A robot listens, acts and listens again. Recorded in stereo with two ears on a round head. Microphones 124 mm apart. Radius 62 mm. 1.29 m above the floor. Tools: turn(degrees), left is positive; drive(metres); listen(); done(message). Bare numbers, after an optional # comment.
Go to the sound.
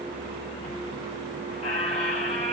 # The squeak: about 50° left or 130° left.
turn(50)
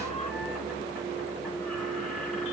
listen()
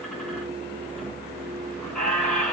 drive(1.0)
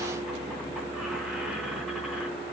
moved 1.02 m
listen()
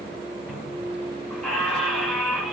drive(1.0)
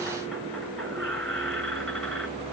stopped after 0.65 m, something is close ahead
# The squeak is now 10° left.
turn(10)
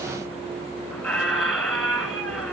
done("Arrived at the squeak, straight ahead.")